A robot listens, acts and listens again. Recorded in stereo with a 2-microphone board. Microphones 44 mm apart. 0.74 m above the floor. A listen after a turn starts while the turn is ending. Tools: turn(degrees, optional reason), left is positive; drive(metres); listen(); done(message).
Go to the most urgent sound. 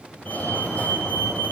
turn(degrees=40, reason="The fire alarm: about 40° left or 140° left.")
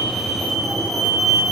drive(metres=1.0)
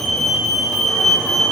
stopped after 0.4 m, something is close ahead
done("Blocked. The fire alarm is further on, straight ahead.")